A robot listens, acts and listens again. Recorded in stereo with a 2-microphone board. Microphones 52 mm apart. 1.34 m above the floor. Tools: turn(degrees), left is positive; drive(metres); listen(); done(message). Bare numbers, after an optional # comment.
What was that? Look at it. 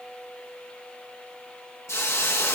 # The hiss: about 65° left or 115° left.
turn(65)
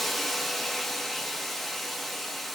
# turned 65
done("Facing the hiss.")